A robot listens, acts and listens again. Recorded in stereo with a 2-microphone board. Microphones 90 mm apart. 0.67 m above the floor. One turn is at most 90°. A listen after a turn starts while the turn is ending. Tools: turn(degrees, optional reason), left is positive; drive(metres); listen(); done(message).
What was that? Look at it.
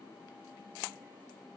listen()
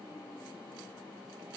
listen()
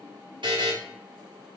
turn(degrees=-65, reason="The buzzer: about 65° right or 115° right.")
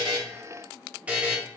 turn(degrees=-20, reason="So it is at 20° right.")
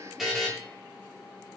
done("Facing the buzzer, under 1 m away.")